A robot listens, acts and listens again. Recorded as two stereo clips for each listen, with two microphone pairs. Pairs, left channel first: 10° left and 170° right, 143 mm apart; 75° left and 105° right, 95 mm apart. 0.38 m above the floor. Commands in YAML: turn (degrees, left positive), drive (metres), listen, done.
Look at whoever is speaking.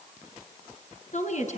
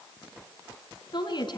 turn: 40
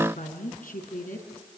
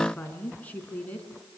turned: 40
done: "Facing the woman speaking, over 4 m away."